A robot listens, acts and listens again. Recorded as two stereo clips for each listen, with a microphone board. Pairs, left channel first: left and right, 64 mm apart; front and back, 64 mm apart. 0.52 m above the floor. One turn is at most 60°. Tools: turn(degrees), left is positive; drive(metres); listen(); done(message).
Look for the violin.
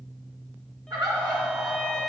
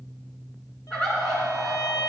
turn(degrees=10)
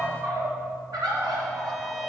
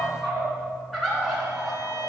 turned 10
listen()
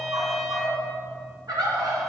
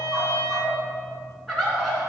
done("Found it: a violin, straight ahead, 1 to 2 m away.")